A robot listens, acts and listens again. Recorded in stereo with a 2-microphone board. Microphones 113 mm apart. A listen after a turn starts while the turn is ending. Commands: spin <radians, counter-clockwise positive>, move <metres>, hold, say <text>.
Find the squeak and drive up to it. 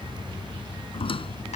spin 0.87
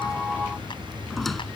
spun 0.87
move 1.0
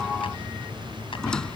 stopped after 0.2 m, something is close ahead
say Blocked. The squeak is further on, straight ahead.